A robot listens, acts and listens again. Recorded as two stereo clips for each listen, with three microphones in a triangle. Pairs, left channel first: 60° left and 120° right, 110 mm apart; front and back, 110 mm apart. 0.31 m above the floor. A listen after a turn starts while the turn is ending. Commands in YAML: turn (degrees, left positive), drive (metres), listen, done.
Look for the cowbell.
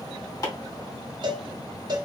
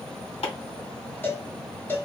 turn: -70
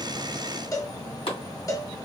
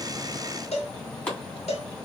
done: "Facing the cowbell, under 1 m away."